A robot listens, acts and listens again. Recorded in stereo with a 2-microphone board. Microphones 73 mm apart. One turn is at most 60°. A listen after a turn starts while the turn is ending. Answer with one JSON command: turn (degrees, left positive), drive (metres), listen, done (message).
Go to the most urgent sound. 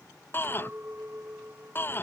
{"turn": 30}
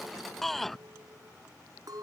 {"drive": 1.0}
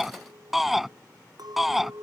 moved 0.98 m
{"drive": 1.0}
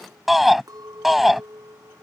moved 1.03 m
{"drive": 1.0}
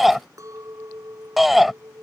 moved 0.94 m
{"drive": 1.0}
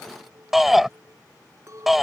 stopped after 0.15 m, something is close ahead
{"done": "I am next to the shout."}